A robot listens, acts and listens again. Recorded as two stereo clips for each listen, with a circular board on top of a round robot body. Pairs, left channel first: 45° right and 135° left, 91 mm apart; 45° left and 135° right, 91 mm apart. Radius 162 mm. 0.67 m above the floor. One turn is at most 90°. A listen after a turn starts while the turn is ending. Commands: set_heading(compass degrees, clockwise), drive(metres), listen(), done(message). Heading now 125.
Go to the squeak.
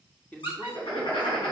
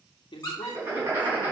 set_heading(135)
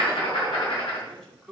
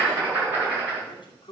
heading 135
listen()
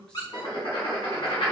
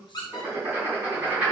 drive(1.0)
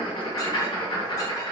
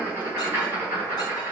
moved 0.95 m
listen()
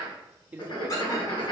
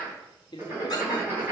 listen()
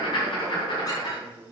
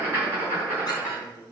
done("Facing where the squeak came from. I can't hear it now. I did not reach it.")